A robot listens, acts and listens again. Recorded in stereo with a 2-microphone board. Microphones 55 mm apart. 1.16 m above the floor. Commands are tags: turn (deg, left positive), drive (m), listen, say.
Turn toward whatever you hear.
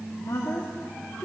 <turn deg="90"/>
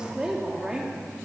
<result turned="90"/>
<turn deg="-15"/>
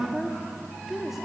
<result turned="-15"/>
<say>Found it: a woman speaking, straight ahead, 2 to 4 m away.</say>